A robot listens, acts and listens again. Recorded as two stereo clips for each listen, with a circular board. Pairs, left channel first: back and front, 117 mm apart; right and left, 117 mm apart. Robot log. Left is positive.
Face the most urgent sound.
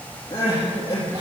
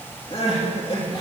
note: The crying: 125° right.
cmd yaw -125
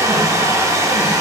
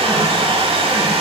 cmd idle
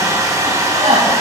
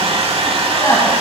note: The crying is now 20° right.
cmd yaw -20
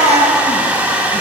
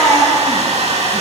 end: Facing the crying.